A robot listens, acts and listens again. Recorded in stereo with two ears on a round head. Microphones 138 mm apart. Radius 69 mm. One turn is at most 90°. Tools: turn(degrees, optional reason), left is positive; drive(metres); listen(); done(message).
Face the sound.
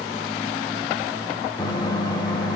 turn(degrees=25, reason="The microwave: about 25° left or 155° left.")
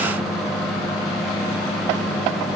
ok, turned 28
done("Found it: a microwave, straight ahead.")